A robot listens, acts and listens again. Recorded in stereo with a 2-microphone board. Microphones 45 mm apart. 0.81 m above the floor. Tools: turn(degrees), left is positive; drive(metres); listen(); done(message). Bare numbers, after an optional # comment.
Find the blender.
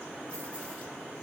listen()
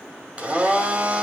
# The blender: about 30° right or 150° right.
turn(-30)
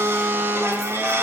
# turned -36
# So it is at 115° right.
turn(-115)
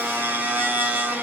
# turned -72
# The blender is now 45° right.
turn(-45)
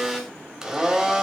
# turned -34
# The blender is now 10° right.
turn(-10)
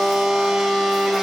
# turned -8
done("Facing the blender, 1 to 2 m away.")